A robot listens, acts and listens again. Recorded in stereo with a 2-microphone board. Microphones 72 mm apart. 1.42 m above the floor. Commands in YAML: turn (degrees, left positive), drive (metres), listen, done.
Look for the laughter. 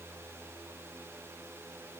listen: true
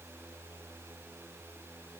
listen: true
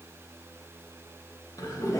turn: 50
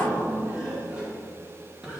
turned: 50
turn: -15
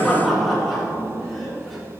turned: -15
done: "Facing the laughter."